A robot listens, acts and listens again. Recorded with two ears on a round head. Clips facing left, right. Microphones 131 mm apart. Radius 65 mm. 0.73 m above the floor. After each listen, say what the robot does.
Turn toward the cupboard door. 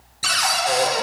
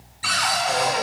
Turn 50° left.
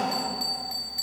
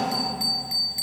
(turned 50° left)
Keep listening.
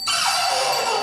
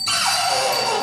Facing the cupboard door.